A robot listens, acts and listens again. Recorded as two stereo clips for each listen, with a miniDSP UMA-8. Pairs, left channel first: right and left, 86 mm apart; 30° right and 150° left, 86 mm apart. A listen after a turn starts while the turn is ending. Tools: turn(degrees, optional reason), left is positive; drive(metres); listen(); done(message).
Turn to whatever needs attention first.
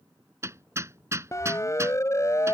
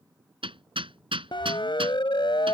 turn(degrees=-40, reason="The siren: 40° right.")
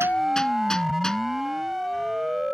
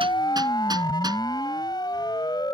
done("Found it: a siren, straight ahead.")